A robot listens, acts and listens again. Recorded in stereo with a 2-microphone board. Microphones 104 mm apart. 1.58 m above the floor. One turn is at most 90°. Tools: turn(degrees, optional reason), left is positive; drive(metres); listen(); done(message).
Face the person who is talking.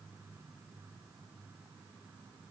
listen()
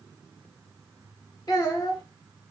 turn(degrees=35, reason="The child speaking: about 35° left or 145° left.")
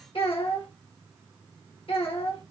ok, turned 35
turn(degrees=90, reason="So it is at 105° left.")
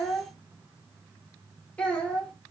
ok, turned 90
turn(degrees=15, reason="The child speaking is now 15° left.")
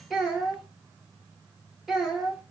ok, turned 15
done("Facing the child speaking, 1 to 2 m away.")